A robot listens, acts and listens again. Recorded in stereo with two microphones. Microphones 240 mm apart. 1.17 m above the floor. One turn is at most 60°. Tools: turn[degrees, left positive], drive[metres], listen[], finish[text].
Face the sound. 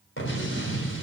Thought: The explosion: about 55° left or 125° left.
Action: turn[55]
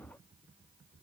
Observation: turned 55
Action: listen[]
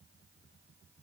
Action: finish[I heard an explosion, but can't make it out now. It was about straight ahead or 70° left.]